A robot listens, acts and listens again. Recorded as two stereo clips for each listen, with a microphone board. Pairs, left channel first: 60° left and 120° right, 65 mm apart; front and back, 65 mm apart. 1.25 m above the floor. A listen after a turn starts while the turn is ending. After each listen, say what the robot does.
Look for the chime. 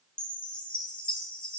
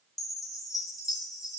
Turn 10° right.
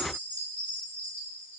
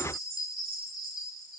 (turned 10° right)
Facing the chime.